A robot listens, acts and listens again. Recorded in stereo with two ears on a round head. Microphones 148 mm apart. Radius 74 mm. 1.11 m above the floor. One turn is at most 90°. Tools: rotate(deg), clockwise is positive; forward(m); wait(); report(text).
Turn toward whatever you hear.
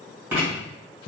rotate(30)
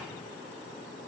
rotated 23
wait()
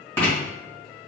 rotate(-10)
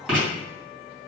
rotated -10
report("Facing the writing.")